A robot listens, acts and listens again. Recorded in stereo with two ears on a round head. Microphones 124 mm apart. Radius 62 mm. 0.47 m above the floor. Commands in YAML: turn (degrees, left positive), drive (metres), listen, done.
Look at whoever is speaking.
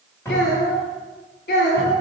turn: 75
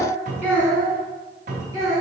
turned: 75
turn: -20
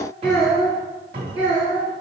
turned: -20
turn: -10
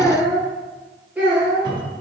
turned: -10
turn: -10
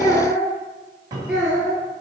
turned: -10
done: "Facing the child speaking."